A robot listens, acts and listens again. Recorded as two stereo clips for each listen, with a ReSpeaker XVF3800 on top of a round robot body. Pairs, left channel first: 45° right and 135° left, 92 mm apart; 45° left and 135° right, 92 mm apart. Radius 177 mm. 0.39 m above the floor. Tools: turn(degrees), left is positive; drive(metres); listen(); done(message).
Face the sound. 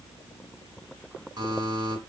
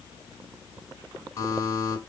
turn(degrees=100)
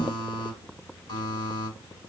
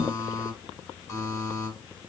turn(degrees=-10)
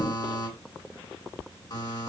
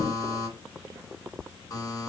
done("Found it: a buzzer, straight ahead.")